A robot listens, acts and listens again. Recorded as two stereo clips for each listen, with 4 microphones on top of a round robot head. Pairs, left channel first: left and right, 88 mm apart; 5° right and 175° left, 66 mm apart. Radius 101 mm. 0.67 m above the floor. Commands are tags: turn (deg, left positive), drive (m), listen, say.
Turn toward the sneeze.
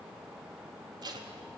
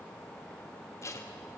<listen/>
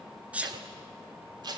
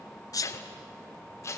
<turn deg="-15"/>
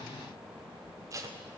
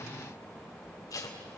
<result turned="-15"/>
<say>I heard a sneeze from this way, but can't make it out now.</say>